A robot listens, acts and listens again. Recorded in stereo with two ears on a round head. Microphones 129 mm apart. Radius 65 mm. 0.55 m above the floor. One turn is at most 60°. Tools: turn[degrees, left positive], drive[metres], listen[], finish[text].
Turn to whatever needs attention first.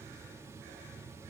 Action: listen[]
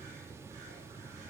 Action: listen[]
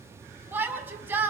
Action: turn[-30]
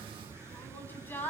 Thought: So it is at 15° left.
Action: turn[15]
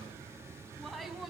Action: finish[Facing the shout.]